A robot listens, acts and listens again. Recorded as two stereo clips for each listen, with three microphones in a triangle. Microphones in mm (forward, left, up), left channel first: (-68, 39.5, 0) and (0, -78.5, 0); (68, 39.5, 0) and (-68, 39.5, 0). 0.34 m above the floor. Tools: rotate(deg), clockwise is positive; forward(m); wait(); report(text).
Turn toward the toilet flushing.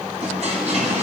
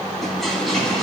rotate(85)
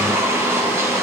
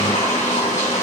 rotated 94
rotate(-10)
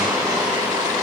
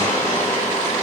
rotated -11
report("Found it: a toilet flushing, straight ahead.")